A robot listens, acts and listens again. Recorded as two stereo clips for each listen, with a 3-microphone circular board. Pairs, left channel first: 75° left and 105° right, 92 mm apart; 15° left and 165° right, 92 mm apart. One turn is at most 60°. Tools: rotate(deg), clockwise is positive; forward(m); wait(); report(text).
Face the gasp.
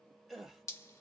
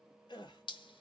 rotate(15)
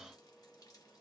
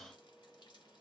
report("Facing where the gasp came from. I can't hear it now.")